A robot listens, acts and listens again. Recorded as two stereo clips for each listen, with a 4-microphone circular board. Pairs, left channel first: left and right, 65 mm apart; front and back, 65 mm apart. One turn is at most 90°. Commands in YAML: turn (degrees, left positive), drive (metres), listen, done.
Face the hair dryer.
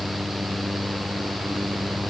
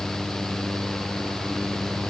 listen: true
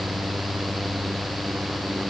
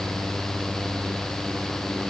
listen: true
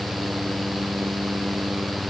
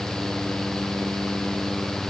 done: "I can't make out a hair dryer to turn to."